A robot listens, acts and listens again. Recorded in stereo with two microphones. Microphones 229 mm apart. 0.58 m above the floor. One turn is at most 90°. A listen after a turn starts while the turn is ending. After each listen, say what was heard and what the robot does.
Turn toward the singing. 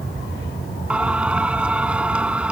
Turn 30° right.
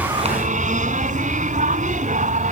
So it is at 145° right. Turn 90° right.
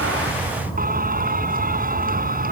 The singing is now 40° right. Turn 40° right.
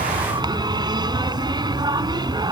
The singing is now 20° right. Turn 20° right.
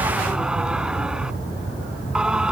Facing the singing.